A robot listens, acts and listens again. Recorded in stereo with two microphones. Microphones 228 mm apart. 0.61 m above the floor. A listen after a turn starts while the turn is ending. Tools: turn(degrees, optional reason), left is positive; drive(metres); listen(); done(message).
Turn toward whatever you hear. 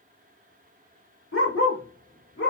turn(degrees=90)
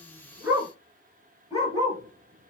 turn(degrees=-15, reason="So it is at 15° right.")
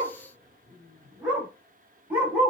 done("Found it: a dog barking, straight ahead.")